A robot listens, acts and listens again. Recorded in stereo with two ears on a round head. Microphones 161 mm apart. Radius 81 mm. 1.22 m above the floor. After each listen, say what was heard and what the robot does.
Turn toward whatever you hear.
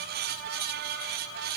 Keep listening.
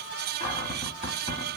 The cupboard door: about 35° left or 145° left. Turn 35° left.
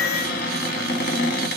So it is at 105° left. Turn 105° left.
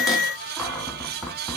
Facing the cupboard door, 1 to 2 m away.